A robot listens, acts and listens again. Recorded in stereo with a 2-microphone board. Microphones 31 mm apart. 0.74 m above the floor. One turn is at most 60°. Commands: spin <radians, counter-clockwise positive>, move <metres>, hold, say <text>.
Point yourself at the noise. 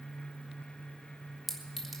spin 0.52
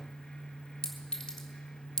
spin 1.05
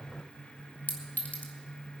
spin 1.05
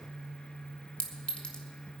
spin 0.79
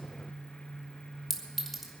say Facing the clink.